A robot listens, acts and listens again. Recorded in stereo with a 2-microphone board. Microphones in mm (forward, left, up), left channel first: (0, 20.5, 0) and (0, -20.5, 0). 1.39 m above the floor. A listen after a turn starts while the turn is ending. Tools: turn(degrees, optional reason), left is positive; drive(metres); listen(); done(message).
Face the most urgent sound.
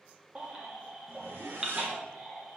turn(degrees=-20, reason="The baby crying: about 20° right or 160° right.")
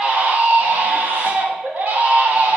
turn(degrees=-140, reason="So it is at 140° right.")
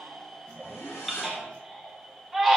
done("Facing the baby crying.")